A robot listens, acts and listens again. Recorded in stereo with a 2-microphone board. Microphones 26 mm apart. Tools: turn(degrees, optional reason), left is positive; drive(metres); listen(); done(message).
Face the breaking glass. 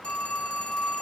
listen()
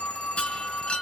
turn(degrees=50, reason="The breaking glass: about 50° left or 130° left.")
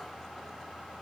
listen()
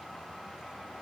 done("I heard breaking glass, but can't make it out now. It was about straight ahead or 80° left.")